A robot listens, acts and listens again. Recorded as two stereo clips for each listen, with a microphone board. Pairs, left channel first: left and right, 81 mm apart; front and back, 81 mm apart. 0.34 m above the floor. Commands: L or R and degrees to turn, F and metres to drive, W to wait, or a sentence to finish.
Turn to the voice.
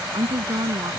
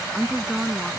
R95
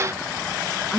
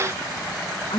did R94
Facing the woman speaking.